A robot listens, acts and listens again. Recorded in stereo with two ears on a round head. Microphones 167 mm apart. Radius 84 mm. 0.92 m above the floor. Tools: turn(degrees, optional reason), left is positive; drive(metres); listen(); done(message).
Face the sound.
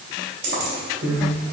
turn(degrees=-70, reason="The keys jangling: about 70° right or 110° right.")
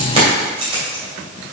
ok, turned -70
turn(degrees=-30, reason="So it is at 30° right.")
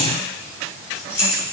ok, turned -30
turn(degrees=20, reason="The keys jangling is now 20° left.")
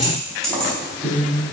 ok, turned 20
done("Facing the keys jangling.")